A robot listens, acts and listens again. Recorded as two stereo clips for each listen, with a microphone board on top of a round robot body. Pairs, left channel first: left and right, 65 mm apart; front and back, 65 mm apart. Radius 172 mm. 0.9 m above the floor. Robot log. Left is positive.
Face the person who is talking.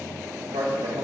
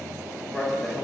note: The man speaking: 85° right.
cmd yaw -85
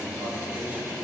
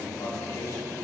cmd idle
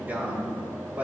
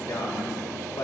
note: The man speaking is now 25° right.
cmd yaw -25
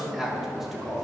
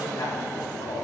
end: Found it: a man speaking, straight ahead.